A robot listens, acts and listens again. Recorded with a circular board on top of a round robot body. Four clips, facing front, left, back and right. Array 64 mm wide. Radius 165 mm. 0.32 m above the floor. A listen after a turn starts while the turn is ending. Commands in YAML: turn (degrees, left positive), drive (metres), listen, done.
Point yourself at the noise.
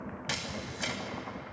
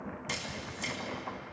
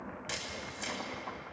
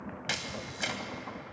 turn: -65
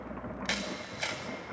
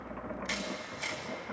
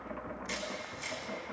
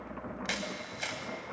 turn: -30
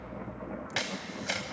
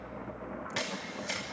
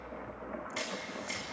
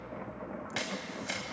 turn: -10
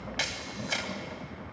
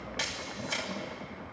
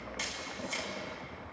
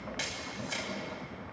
done: "Found it: a camera shutter, straight ahead."